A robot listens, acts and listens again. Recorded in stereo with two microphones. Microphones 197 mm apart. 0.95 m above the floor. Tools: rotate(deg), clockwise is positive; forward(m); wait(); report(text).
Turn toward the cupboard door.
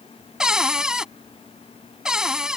rotate(30)
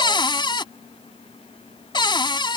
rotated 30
rotate(-25)
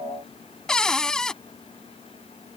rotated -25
report("Facing the cupboard door.")